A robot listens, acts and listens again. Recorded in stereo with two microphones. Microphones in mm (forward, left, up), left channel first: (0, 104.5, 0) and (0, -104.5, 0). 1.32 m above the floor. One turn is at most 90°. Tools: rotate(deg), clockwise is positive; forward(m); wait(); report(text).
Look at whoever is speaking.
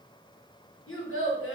rotate(-90)
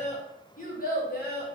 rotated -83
rotate(-50)
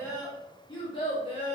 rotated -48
rotate(-30)
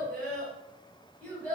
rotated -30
report("Facing the child speaking, 1 to 2 m away.")